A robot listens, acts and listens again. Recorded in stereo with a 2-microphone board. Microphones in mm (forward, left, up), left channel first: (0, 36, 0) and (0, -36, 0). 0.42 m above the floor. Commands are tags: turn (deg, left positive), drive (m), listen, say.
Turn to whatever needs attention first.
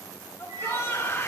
<turn deg="35"/>
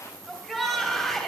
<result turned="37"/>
<say>Facing the shout, 2 to 4 m away.</say>